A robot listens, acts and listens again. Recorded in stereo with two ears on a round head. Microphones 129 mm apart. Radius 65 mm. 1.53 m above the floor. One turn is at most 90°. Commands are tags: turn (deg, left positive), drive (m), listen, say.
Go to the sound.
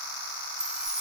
<turn deg="-30"/>
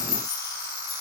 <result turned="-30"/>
<turn deg="25"/>
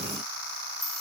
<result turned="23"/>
<drive m="1.0"/>
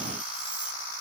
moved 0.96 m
<listen/>
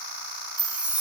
<turn deg="-10"/>
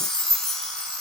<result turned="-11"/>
<drive m="1.0"/>
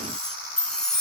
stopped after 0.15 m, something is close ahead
<say>Arrived at the chime, straight ahead.</say>